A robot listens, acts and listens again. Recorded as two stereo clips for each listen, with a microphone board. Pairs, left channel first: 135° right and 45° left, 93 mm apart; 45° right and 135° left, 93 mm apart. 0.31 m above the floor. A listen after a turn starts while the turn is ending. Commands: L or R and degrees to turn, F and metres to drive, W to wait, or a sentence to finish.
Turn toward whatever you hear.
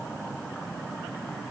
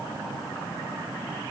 W
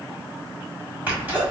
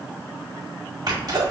L110
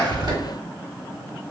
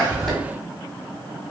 Facing where the sneeze came from. I can't hear it now.